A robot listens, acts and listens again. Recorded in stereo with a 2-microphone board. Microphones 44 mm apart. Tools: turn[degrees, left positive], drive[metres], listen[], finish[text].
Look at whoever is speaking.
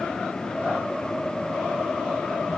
Action: listen[]
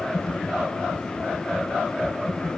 Action: listen[]
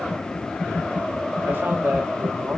Thought: The man speaking: about 55° right or 125° right.
Action: turn[-55]
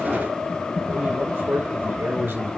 Thought: So it is at 65° right.
Action: turn[-65]
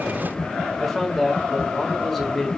Action: finish[Found it: a man speaking, straight ahead, 2 to 4 m away.]